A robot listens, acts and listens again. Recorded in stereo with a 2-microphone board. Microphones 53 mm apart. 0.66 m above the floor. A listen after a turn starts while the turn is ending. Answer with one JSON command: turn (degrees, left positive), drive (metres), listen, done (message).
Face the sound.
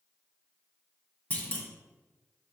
{"turn": 25}
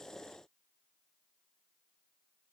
{"listen": true}
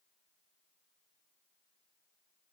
{"done": "I heard a clunk, but can't make it out now. It was about straight ahead or 130° left."}